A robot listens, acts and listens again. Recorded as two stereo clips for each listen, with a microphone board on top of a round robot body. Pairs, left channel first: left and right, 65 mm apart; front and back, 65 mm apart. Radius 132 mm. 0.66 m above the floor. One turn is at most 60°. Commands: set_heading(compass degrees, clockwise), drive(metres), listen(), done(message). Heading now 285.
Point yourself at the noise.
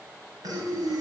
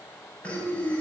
set_heading(345)
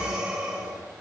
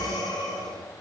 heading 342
set_heading(357)
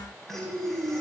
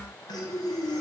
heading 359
done("Facing the breathing.")